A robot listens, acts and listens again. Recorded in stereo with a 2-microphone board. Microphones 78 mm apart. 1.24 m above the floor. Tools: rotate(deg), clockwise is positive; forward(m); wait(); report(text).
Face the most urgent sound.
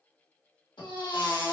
rotate(-90)
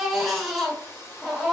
report("Found it: a baby crying, straight ahead.")